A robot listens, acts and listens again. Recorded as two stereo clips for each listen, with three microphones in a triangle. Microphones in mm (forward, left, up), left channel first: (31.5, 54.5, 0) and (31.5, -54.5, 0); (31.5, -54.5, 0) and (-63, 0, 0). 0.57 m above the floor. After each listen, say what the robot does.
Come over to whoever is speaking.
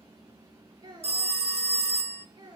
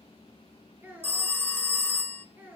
Turn 140° right.
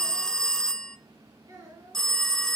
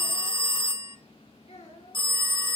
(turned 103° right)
Turn 35° right.
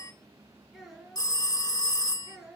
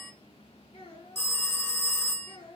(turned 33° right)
Drive 1.0 m forward.
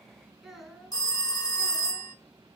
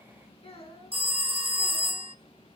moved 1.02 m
Drive 1.0 m forward.
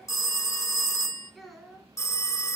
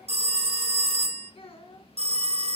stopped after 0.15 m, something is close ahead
Something is in my way. I am facing the child speaking but have not reached it.